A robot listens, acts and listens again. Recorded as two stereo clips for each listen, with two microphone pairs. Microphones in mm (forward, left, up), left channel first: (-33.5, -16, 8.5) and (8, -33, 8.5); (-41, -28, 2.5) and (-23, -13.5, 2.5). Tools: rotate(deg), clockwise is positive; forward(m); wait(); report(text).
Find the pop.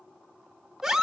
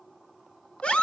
wait()
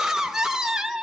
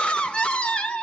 wait()
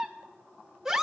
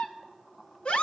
report("I can't make out a pop to turn to.")